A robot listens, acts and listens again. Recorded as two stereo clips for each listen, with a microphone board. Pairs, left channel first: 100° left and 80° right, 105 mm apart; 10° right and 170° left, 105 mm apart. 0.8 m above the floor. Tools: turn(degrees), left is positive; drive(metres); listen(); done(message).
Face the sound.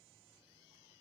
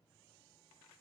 listen()
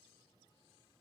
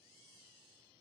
listen()
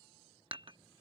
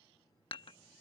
turn(degrees=-45)
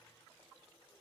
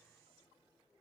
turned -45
listen()
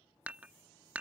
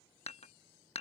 done("Facing the dishes clattering.")